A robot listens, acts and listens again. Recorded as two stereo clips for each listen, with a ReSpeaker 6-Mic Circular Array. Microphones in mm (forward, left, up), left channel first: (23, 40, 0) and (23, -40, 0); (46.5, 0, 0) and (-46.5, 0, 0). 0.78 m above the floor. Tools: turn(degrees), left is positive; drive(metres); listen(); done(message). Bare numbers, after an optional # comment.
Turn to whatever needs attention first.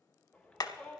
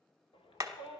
# The shout: 15° left.
turn(15)
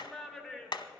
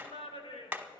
done("Facing the shout.")